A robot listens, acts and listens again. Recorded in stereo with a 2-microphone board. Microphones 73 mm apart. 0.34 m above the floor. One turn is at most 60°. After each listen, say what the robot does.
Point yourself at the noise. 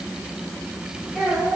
Turn 30° left.
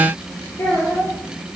Turn 60° left.
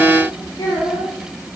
Turn 60° left.
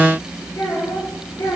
Turn 60° left.
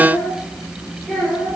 Facing the child speaking.